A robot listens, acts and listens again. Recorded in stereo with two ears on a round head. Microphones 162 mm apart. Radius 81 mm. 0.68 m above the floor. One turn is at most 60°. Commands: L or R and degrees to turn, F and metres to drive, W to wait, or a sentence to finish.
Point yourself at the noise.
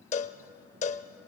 L40
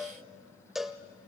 Found it: a cowbell, straight ahead.